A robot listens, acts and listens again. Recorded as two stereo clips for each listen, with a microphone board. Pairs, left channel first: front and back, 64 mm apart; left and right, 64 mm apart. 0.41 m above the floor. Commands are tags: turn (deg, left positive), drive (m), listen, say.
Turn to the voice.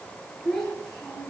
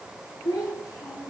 <turn deg="80"/>
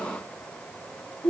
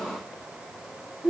<say>Facing the child speaking.</say>